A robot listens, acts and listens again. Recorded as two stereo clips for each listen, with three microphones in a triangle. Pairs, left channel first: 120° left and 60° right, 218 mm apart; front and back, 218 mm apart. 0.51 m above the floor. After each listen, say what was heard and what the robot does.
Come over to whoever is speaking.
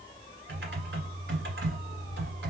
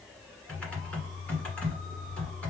Keep listening.
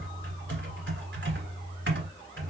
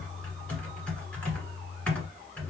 Keep listening.
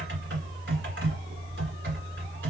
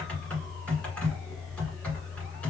I can't make out anyone speaking to turn to.